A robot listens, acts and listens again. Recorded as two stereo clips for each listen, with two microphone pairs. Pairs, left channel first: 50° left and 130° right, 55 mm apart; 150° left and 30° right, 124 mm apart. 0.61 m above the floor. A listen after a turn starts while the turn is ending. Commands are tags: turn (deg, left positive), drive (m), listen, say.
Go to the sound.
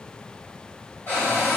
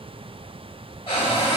<turn deg="105"/>
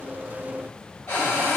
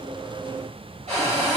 <drive m="1.0"/>
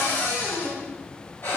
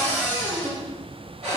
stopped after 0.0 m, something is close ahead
<say>Something is in my way. I am facing the cupboard door but have not reached it.</say>